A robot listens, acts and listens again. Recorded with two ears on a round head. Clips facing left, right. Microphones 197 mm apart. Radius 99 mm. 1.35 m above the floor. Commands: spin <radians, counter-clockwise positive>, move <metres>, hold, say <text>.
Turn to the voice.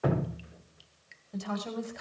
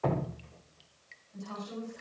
spin 1.57
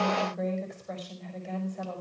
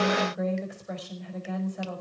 spin -0.17
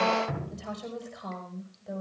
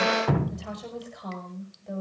say Facing the woman speaking, over 4 m away.